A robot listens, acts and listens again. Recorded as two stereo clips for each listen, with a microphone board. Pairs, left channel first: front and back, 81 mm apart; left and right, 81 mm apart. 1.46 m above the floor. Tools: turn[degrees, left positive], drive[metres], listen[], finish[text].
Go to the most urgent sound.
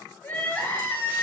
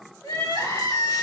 Thought: The crying: 65° left.
Action: turn[65]
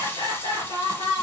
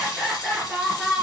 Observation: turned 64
Action: drive[1.0]
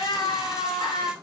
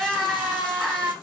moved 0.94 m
Action: drive[1.0]
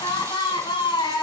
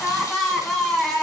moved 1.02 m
Action: drive[1.0]
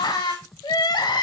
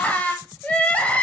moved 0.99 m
Thought: The crying is now 20° left.
Action: turn[20]
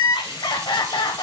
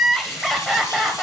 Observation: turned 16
Action: drive[1.0]
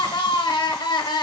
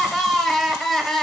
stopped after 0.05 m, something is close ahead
Action: finish[Arrived at the crying, straight ahead.]